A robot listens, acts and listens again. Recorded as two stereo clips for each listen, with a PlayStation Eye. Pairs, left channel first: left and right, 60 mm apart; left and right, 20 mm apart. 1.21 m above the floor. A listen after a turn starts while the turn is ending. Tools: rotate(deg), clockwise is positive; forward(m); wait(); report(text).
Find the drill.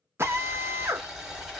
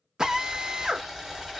rotate(40)
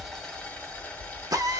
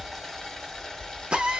rotate(100)
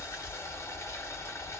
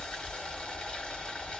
wait()
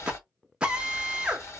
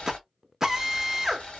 rotate(20)
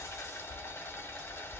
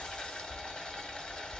wait()
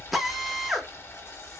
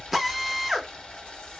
report("Found it: a drill, straight ahead.")